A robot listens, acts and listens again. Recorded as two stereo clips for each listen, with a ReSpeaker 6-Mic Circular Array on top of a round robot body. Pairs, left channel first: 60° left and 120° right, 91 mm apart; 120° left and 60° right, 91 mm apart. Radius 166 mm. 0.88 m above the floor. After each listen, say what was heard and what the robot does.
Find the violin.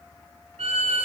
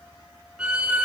The violin: 140° right. Turn 140° right.
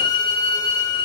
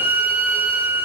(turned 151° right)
The violin is now 15° left. Turn 15° left.
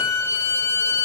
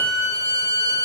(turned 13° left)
Found it: a violin, straight ahead.